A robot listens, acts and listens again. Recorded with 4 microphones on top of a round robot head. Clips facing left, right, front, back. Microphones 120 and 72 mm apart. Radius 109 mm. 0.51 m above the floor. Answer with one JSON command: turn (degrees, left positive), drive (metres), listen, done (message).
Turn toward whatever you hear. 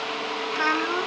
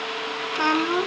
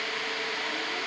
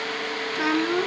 {"turn": -160}
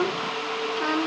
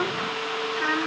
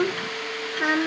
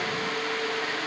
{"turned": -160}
{"turn": 20}
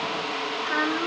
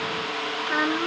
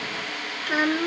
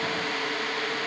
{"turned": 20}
{"done": "Found it: a child speaking, straight ahead."}